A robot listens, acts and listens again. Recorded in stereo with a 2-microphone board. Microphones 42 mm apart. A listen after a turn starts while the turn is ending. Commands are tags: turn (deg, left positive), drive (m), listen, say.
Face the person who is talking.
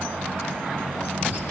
<listen/>
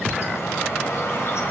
<listen/>
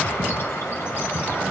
<say>I can't make out anyone speaking to turn to.</say>